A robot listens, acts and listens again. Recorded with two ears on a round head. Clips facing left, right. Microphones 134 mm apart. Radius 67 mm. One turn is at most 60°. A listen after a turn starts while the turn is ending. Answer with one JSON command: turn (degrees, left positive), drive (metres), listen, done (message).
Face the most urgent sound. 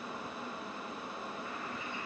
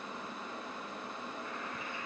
{"listen": true}
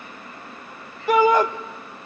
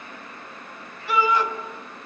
{"turn": 40}
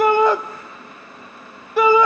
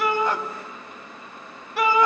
{"turn": 60}
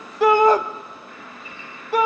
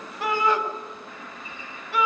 {"turn": 35}
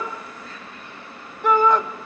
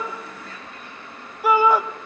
{"done": "Facing the shout, 1 to 2 m away."}